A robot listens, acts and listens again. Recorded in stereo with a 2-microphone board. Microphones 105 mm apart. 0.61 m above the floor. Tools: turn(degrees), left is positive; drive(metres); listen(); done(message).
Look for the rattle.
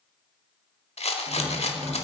turn(degrees=90)
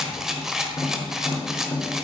done("Found it: a rattle, straight ahead.")